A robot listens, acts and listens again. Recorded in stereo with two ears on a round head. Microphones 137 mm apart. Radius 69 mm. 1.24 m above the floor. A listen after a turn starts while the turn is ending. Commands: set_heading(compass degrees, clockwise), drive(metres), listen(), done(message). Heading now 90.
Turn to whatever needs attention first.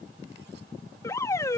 set_heading(70)
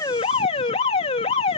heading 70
set_heading(295)
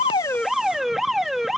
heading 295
done("Facing the alarm.")